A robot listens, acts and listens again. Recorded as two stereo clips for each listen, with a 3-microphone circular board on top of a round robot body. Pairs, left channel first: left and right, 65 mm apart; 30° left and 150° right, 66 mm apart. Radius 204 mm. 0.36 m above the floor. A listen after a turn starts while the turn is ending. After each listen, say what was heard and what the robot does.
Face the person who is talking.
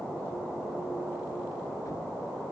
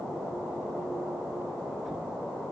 Keep listening.
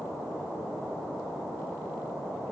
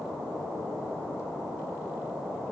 Keep listening.
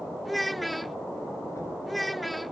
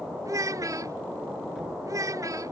The child speaking: straight behind. Turn 180° left.
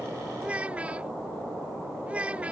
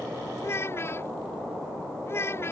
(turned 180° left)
The child speaking is now 20° right. Turn 20° right.
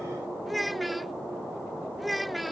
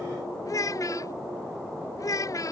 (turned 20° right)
Found it: a child speaking, straight ahead.